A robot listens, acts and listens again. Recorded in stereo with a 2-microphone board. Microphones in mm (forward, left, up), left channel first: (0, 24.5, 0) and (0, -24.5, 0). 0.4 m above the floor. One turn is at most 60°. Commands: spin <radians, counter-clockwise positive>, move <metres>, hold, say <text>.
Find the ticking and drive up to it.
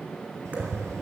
spin -1.05
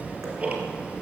spin -0.52
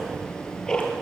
spin 0.26
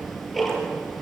move 1.0
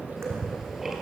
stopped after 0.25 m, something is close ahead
spin -0.17
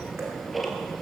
say Blocked. The ticking is further on, straight ahead.